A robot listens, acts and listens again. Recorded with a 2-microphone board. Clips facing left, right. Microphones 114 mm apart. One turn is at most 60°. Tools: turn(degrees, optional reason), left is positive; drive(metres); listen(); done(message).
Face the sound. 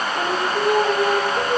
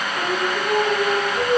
turn(degrees=50, reason="The singing: about 50° left or 130° left.")
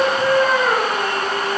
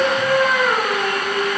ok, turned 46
done("Facing the singing, 2 to 4 m away.")